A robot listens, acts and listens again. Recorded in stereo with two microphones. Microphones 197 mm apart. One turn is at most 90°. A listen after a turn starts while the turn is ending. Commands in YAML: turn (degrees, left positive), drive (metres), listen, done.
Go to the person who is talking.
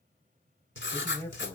turn: 30
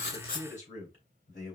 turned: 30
turn: 90
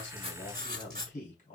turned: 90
turn: 45
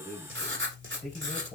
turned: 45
drive: 1.0
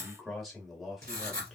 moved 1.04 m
drive: 1.0
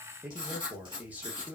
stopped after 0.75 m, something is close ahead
turn: -10
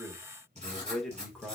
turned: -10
done: "Arrived at the man speaking, straight ahead."